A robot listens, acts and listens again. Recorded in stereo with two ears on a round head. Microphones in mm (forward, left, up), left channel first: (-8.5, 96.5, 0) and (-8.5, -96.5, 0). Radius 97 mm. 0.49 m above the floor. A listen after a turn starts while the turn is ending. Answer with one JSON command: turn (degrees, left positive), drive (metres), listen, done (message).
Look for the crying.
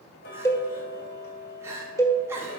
{"turn": -30}
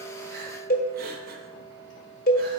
{"listen": true}
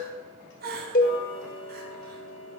{"turn": -135}
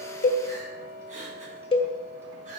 {"turn": -35}
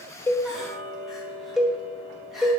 {"listen": true}
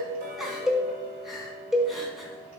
{"done": "Found it: crying, straight ahead, 1 to 2 m away."}